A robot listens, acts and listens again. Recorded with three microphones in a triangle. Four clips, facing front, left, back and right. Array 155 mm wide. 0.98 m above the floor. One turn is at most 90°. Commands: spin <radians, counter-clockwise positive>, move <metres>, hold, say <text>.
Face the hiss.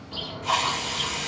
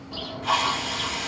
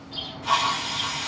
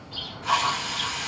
spin 1.57
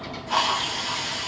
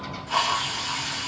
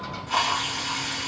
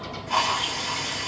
say Found it: a hiss, straight ahead, 1 to 2 m away.